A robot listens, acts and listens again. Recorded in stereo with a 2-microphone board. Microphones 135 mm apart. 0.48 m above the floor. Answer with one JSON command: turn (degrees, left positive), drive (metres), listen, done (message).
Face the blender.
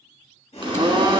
{"turn": -40}
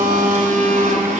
{"turn": -100}
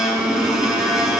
{"done": "Facing the blender, 1 to 2 m away."}